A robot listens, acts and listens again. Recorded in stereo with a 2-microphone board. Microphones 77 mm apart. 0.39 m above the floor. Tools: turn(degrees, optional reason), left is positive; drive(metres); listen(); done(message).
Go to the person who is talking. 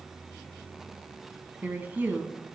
turn(degrees=-25, reason="The woman speaking: about 25° right or 155° right.")
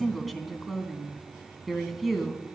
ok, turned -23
drive(metres=1.0)
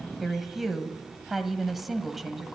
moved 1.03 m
drive(metres=1.0)
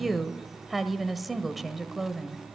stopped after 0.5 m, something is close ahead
done("Arrived at the woman speaking, straight ahead.")